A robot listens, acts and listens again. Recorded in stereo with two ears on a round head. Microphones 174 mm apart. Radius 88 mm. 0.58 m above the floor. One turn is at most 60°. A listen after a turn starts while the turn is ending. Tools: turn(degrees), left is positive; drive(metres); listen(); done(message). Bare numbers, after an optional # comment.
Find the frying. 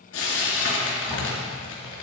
turn(60)
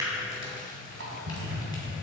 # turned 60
# Nothing new. It was at 30° left.
turn(30)
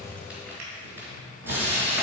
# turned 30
# The frying is now 10° right.
turn(-10)
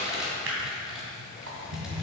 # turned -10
done("Found it: frying, straight ahead.")